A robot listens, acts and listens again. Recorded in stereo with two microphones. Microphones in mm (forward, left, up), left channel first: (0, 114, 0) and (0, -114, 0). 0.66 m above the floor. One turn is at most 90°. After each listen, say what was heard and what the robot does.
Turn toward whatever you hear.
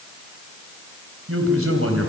Turn 90° right.
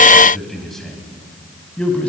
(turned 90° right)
Found it: a man speaking, straight ahead, over 4 m away.